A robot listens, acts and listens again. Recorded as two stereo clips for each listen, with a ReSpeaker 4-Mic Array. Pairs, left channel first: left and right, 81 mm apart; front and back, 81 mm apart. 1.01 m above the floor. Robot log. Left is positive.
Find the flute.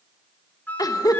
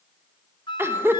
note: The flute: 20° left.
cmd yaw +20
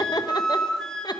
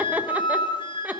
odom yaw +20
note: The flute is now 10° left.
cmd yaw +10
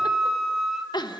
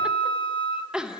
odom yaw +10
end: Facing the flute.